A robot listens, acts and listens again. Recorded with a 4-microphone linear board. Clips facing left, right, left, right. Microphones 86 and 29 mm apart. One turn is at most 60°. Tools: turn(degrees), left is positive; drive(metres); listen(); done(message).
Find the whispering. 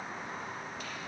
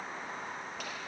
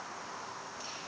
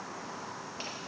listen()
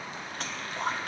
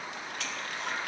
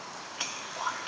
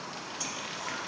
turn(degrees=40)
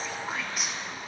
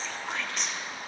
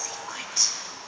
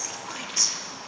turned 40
turn(degrees=10)
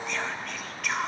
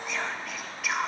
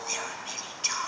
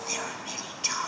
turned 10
done("Found it: whispering, straight ahead.")